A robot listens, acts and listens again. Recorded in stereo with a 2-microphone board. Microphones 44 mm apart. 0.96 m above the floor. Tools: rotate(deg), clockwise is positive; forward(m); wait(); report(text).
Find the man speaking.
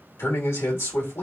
rotate(-70)
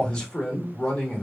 rotate(-20)
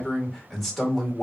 report("Facing the man speaking, 1 to 2 m away.")